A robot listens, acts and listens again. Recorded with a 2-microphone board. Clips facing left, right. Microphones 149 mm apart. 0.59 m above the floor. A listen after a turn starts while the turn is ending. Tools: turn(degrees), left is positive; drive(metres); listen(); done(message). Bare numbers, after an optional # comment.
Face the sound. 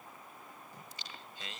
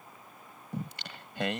# The singing: about 70° right or 110° right.
turn(-70)
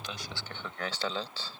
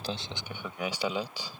# So it is at 15° right.
turn(-15)
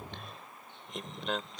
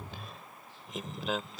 done("Facing the singing.")